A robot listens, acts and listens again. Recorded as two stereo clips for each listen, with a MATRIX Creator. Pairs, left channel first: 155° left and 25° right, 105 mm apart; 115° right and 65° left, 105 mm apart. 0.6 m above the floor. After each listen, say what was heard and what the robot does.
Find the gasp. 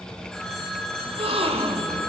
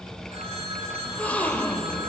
The gasp: 35° right. Turn 35° right.
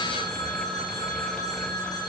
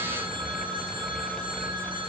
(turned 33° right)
Facing where the gasp came from. I can't hear it now.